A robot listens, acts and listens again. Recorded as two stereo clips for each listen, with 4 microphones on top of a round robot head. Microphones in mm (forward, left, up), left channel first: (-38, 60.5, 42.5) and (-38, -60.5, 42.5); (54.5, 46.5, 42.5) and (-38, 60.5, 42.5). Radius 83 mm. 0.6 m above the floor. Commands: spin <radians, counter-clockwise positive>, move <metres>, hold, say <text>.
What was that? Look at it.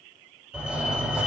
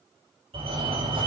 spin -2.97
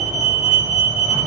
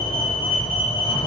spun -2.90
say Found it: a fire alarm, straight ahead, 2 to 4 m away.